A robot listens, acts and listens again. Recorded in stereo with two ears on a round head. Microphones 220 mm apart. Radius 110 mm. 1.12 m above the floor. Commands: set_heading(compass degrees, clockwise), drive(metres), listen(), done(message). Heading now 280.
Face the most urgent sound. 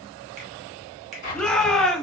set_heading(250)
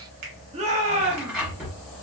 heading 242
set_heading(277)
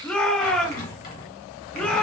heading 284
done("Facing the shout, 1 to 2 m away.")